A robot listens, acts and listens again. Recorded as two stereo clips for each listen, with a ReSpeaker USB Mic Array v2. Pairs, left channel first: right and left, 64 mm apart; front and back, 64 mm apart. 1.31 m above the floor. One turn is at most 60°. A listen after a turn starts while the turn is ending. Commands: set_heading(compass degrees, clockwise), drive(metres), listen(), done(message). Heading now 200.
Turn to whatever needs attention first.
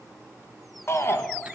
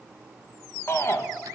set_heading(245)
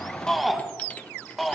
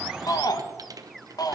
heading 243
done("Facing the shout.")